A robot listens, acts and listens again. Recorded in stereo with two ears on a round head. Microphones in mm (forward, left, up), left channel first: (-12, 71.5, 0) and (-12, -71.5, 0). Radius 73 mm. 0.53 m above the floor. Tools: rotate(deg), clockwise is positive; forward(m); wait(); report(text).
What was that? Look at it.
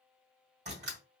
rotate(45)
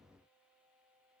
wait()
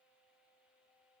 report("I heard a door slam, but can't make it out now. It was about straight ahead or 90° right.")